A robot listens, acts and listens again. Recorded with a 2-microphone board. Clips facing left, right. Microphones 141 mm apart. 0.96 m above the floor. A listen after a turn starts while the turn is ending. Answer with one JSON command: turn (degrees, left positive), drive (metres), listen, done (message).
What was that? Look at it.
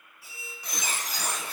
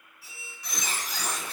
{"turn": 50}
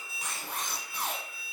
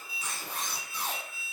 {"turn": 75}
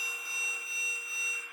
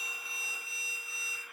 {"turn": 30}
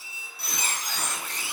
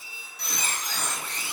{"done": "Found it: a squeak, straight ahead."}